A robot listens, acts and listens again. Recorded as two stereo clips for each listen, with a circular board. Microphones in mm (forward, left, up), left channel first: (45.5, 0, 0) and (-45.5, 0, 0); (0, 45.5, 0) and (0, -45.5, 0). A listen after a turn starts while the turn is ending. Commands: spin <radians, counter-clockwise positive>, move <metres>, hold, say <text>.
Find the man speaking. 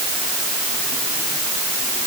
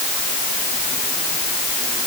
hold
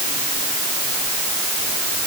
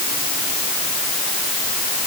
hold
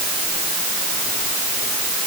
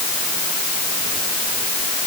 say I can't make out a man speaking to turn to.